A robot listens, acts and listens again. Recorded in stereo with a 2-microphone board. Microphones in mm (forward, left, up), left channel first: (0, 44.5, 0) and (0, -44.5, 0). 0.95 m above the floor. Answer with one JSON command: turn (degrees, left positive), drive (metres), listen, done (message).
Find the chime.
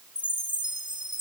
{"turn": -70}
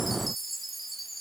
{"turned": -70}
{"done": "Facing the chime."}